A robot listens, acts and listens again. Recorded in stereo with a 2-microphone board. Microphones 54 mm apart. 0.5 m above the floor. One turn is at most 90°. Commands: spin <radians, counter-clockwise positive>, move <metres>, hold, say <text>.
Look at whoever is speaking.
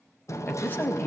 spin 0.70
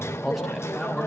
say Found it: a man speaking, straight ahead, 2 to 4 m away.